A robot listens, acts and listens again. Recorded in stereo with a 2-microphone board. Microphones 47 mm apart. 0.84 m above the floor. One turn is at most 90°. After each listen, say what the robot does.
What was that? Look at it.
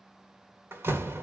Turn 60° right.
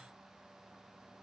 Keep listening.
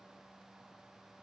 I heard a door slam, but can't make it out now. It was about straight ahead or 60° right.